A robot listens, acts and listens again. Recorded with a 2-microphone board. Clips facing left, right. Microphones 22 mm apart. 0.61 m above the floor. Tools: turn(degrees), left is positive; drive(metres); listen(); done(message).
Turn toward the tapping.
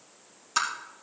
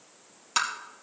turn(degrees=-30)
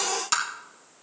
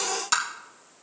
done("Found it: tapping, straight ahead, 2 to 4 m away.")